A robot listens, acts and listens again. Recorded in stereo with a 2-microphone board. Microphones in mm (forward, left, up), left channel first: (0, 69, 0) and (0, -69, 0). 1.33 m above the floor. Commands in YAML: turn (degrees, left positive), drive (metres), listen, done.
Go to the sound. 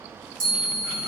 turn: 70
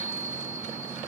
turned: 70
turn: 10
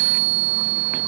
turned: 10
drive: 1.0
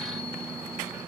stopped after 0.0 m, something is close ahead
done: "Something is in my way. I am facing the chime but have not reached it."